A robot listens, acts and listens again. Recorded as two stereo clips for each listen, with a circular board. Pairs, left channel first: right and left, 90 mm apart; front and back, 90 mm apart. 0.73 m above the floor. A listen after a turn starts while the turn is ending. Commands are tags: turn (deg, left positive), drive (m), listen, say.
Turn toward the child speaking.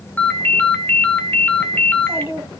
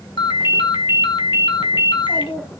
<turn deg="25"/>
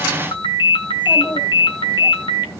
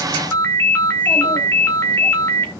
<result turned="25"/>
<listen/>
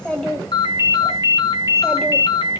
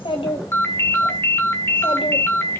<say>Found it: a child speaking, straight ahead, 2 to 4 m away.</say>